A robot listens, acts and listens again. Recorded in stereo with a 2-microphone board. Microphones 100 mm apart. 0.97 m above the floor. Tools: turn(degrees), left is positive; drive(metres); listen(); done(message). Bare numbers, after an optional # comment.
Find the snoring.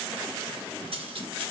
listen()
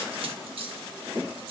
listen()
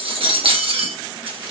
done("I can't make out snoring to turn to.")